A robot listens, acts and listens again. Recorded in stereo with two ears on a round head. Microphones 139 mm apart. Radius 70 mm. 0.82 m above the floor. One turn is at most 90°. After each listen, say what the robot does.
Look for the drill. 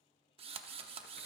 Turn 35° right.
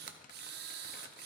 Turn 90° right.
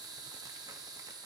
Turn 25° right.
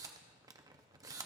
Turn 20° right.
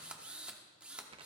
Facing the drill, under 1 m away.